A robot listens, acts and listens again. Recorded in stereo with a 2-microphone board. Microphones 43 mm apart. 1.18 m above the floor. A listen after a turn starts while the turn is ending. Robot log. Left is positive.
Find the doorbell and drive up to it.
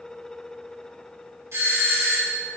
cmd yaw -90
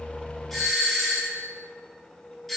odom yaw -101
cmd fwd 1.0
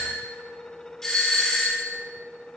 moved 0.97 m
note: The doorbell is now 10° left.
cmd yaw +10
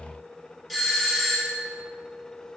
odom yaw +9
cmd fwd 1.0
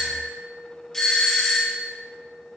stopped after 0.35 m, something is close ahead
note: The doorbell is now 10° left.
cmd yaw +10
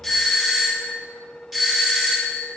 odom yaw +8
end: I am next to the doorbell.